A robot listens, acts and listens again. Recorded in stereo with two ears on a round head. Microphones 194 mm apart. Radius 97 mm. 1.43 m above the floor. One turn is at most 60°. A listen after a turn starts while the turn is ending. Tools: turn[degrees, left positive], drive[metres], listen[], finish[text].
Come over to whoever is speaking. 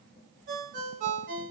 Action: listen[]
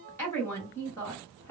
Action: turn[30]
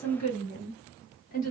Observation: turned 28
Thought: So it is at 140° left.
Action: turn[60]
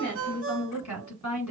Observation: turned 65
Thought: The woman speaking is now 75° left.
Action: turn[60]
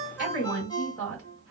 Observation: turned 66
Thought: The woman speaking is now 10° left.
Action: turn[10]
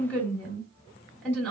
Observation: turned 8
Action: drive[1.0]
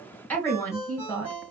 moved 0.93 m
Thought: The woman speaking is now 10° left.
Action: turn[10]
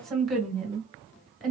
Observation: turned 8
Action: drive[1.0]
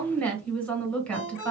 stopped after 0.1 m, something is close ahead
Action: finish[Arrived at the woman speaking, straight ahead.]